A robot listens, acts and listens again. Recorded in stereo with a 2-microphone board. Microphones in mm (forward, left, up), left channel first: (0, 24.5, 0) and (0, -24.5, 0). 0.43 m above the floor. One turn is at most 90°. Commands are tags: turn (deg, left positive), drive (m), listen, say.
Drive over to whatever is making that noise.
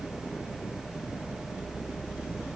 <listen/>
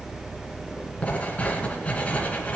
<turn deg="30"/>
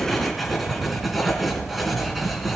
<drive m="1.0"/>
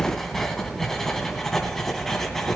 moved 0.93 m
<drive m="1.0"/>
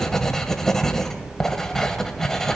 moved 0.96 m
<turn deg="10"/>
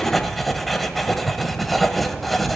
<drive m="1.0"/>
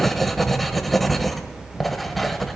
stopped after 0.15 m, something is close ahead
<say>Arrived at the writing, straight ahead.</say>